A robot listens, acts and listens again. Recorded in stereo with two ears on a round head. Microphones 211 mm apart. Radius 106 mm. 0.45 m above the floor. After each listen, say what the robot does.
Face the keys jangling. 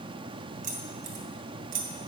Turn 35° right.
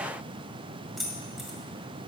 Facing the keys jangling, 1 to 2 m away.